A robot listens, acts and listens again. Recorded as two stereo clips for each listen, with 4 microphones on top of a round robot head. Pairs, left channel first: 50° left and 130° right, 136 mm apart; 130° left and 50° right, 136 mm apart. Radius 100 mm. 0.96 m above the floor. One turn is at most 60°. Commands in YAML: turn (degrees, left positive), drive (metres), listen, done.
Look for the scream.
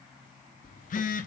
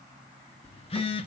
listen: true
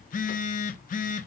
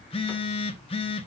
listen: true
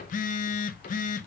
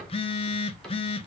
done: "I can't make out a scream to turn to."